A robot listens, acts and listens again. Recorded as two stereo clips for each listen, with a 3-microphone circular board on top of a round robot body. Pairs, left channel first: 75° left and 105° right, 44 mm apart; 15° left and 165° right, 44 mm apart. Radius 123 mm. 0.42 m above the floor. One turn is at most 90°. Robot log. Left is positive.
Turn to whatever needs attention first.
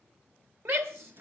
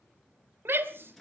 note: The shout: 135° right.
cmd yaw -90
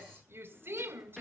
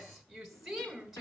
note: The shout is now 80° right.
cmd yaw -80
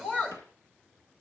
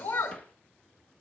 end: Facing the shout.